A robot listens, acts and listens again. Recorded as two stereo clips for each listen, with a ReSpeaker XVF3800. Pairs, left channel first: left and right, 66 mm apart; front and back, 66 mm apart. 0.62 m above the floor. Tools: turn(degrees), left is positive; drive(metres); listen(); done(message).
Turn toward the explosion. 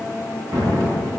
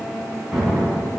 turn(degrees=-95)
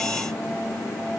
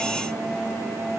done("I heard an explosion from this way, but can't make it out now.")